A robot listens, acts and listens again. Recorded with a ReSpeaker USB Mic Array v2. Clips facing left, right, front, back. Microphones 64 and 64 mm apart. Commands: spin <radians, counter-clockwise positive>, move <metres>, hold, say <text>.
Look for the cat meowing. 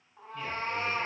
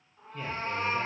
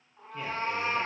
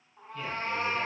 spin 1.48
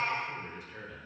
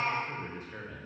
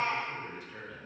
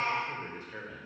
spin -0.17
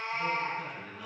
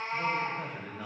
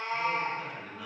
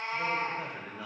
spin -0.26
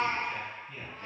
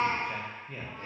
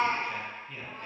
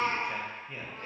spin -0.26
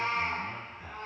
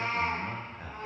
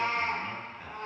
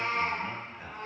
spin -0.26
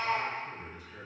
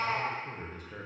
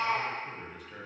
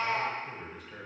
say Facing the cat meowing, 2 to 4 m away.